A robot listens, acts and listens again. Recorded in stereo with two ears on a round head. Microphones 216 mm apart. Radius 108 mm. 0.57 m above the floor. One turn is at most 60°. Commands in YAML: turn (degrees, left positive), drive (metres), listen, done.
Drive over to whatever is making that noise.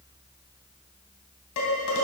turn: 60
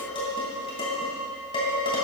turn: 20
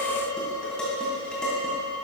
drive: 1.0
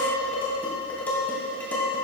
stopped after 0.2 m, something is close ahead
done: "Blocked. The dishes clattering is further on, straight ahead."